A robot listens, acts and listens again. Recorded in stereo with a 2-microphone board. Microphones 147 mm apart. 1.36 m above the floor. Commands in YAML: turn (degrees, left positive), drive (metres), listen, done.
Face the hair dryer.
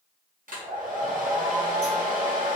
turn: -65
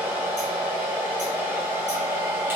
turn: -20
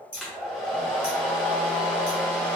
done: "Facing the hair dryer, 1 to 2 m away."